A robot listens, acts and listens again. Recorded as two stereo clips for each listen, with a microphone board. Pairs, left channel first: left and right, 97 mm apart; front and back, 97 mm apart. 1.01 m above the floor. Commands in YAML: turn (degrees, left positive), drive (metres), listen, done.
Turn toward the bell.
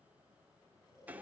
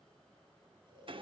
listen: true
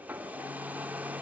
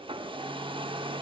listen: true
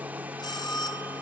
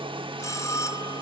turn: 55
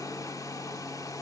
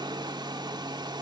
listen: true
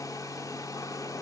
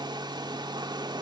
listen: true
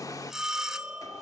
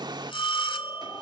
done: "Found it: a bell, straight ahead, 1 to 2 m away."